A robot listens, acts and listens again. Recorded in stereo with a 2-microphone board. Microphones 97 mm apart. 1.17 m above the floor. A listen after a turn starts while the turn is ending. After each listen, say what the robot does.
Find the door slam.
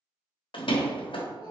Turn 60° left.
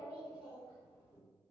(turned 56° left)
Keep listening.
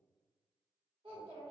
I heard a door slam, but can't make it out now. It was about straight ahead or 65° left.